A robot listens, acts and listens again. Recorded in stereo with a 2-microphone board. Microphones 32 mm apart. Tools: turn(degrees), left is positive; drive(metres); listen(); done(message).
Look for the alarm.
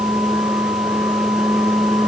listen()
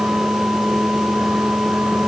listen()
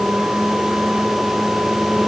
done("I can't make out an alarm to turn to.")